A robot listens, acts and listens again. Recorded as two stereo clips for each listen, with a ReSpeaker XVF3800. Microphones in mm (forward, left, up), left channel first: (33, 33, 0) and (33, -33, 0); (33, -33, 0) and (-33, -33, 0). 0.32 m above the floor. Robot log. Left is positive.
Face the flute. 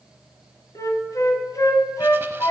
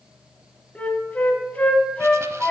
note: The flute: 70° left.
cmd yaw +70
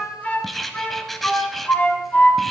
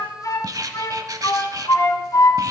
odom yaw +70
note: The flute is now 25° left.
cmd yaw +25
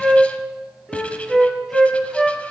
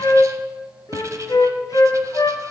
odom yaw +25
end: Facing the flute, 1 to 2 m away.